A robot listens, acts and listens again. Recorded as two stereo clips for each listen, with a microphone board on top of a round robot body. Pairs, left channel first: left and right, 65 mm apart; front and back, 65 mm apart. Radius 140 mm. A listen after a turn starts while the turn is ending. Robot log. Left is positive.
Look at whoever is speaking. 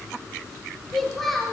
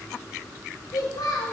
end: Facing the child speaking.